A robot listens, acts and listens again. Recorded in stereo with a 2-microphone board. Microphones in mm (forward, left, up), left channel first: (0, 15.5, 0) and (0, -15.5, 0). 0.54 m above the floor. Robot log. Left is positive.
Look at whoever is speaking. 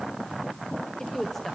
cmd yaw +30
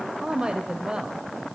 note: So it is at 30° right.
cmd yaw -30
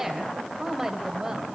note: The woman speaking is now 15° right.
cmd yaw -15
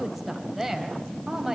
note: The woman speaking is now 10° right.
cmd yaw -10
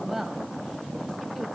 end: Found it: a woman speaking, straight ahead, 2 to 4 m away.